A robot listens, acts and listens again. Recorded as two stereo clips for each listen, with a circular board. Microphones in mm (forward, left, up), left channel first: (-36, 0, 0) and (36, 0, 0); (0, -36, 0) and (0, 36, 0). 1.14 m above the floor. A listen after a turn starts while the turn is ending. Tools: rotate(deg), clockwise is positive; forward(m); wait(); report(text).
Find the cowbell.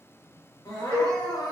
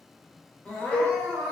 rotate(20)
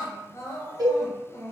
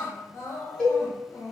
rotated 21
report("Found it: a cowbell, straight ahead, 1 to 2 m away.")